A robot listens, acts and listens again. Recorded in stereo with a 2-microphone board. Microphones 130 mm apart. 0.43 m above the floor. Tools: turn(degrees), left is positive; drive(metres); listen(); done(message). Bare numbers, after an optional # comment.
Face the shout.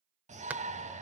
# The shout: about 65° right or 115° right.
turn(-65)
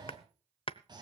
# So it is at 35° right.
turn(-35)
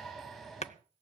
done("Found it: a shout, straight ahead.")